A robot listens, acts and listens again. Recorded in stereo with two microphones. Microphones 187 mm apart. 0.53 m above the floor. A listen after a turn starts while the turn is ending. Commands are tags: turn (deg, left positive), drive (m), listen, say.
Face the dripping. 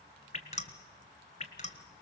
<turn deg="40"/>
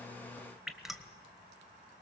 <say>Found it: dripping, straight ahead.</say>